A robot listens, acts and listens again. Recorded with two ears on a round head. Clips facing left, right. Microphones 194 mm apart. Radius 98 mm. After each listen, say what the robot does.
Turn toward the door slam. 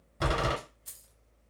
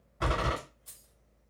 Turn 50° left.
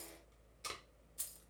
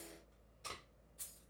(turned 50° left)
Keep listening.
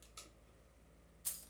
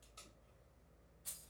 I heard a door slam, but can't make it out now. It was about straight ahead or 80° left.